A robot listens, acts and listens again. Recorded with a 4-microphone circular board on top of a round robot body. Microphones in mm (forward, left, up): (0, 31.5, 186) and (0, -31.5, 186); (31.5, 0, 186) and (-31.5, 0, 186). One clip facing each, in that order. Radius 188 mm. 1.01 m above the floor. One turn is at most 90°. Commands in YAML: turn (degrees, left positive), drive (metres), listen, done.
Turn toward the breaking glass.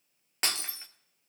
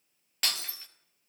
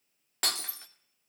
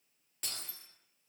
turn: 25
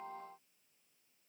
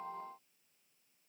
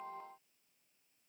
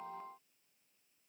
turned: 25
done: "I heard breaking glass from this way, but can't make it out now."